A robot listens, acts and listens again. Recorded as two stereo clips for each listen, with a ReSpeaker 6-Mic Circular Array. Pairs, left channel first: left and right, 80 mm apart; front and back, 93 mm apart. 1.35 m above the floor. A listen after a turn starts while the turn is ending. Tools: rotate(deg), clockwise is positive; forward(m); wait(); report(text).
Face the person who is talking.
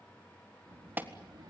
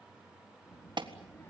rotate(65)
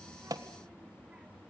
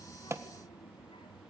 rotate(15)
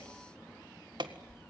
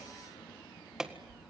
report("Found it: a child speaking, straight ahead, 1 to 2 m away.")